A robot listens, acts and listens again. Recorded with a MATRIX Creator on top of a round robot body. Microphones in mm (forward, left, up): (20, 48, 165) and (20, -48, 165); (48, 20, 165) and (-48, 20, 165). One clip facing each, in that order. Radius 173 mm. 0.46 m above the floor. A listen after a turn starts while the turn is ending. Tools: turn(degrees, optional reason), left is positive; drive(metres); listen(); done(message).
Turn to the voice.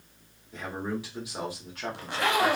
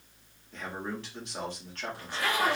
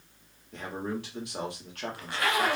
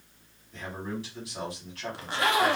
turn(degrees=10, reason="The man speaking: 10° left.")
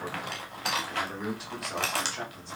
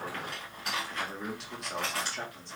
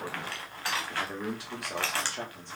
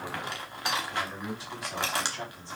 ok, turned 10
done("Facing the man speaking, 2 to 4 m away.")